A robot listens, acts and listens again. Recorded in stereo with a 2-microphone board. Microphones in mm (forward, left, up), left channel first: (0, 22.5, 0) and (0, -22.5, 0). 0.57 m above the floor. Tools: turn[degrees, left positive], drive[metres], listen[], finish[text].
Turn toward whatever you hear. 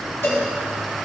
Thought: The cowbell: about 55° left or 125° left.
Action: turn[55]
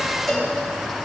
Action: finish[Facing the cowbell.]